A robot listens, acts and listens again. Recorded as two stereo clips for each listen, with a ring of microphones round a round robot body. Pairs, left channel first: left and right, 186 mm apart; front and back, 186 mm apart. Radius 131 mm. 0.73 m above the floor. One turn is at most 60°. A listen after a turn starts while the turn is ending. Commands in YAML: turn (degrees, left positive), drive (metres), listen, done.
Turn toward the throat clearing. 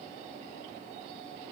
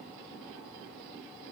listen: true
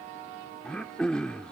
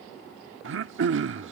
turn: 60
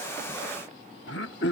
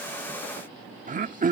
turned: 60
turn: 60
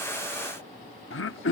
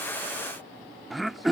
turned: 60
turn: 60
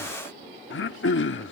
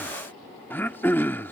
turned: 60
turn: 60
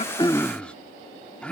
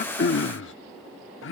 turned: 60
done: "Found it: throat clearing, straight ahead."